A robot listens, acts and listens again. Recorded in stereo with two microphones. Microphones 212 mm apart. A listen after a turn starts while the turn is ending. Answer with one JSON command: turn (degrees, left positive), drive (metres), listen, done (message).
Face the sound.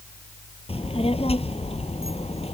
{"turn": 30}
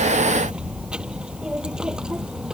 {"done": "Facing the child speaking."}